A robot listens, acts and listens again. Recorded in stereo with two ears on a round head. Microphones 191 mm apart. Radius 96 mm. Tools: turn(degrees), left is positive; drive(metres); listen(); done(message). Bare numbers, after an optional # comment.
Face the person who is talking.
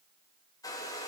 listen()
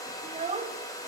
# The child speaking: about 30° right or 150° right.
turn(-30)
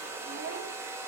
listen()
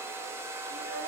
listen()
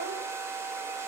done("I heard a child speaking, but can't make it out now. It was about straight ahead or 120° right.")